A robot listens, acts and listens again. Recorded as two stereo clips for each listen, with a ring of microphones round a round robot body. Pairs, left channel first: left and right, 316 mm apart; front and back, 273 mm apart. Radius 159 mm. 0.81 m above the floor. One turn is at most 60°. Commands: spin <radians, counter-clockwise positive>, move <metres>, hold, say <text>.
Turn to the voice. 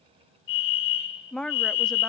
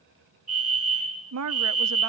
spin 1.05
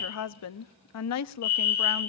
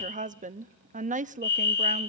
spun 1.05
spin 1.05
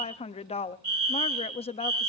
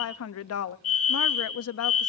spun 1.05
spin 0.35
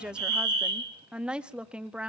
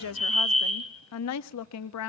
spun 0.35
say Found it: a woman speaking, straight ahead.